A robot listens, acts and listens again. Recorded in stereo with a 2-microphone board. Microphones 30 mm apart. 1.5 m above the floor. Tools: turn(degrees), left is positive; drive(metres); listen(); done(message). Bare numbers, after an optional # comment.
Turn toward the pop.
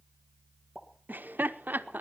turn(30)
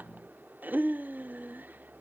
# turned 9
listen()
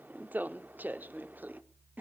done("I heard a pop, but can't make it out now. It was about 5° right or 170° left.")